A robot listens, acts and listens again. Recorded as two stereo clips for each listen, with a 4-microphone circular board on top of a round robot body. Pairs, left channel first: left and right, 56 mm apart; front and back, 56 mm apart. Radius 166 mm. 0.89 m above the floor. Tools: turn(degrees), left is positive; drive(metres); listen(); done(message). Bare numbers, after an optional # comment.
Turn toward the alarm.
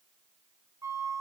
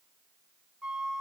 listen()
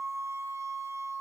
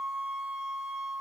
listen()
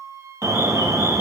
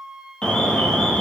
# The alarm: 75° right.
turn(-75)
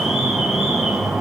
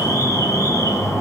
done("Found it: an alarm, straight ahead.")